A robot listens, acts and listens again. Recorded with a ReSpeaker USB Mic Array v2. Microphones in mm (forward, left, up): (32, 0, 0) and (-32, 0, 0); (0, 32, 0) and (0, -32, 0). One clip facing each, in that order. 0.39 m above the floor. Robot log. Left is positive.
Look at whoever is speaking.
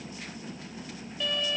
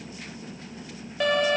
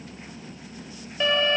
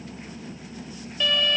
cmd idle
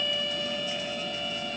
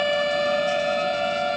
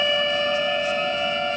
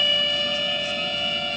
cmd idle
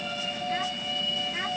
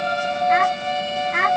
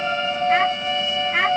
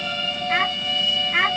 note: The child speaking: straight behind.
cmd yaw +180
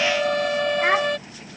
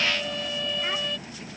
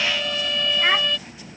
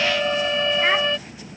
cmd idle
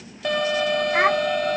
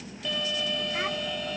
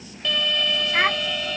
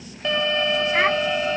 end: Facing the child speaking.